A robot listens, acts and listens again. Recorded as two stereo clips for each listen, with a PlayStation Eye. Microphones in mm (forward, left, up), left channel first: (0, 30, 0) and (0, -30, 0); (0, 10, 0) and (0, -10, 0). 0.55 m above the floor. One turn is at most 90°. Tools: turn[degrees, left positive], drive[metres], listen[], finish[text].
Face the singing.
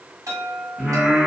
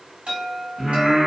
Action: turn[-30]
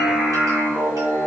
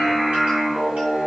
Thought: So it is at 135° right.
Action: turn[-90]
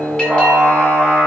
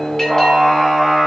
Thought: The singing is now 45° right.
Action: turn[-45]
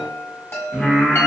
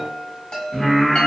Thought: The singing is now 10° right.
Action: turn[-10]
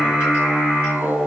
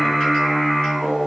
Action: finish[Found it: singing, straight ahead, 1 to 2 m away.]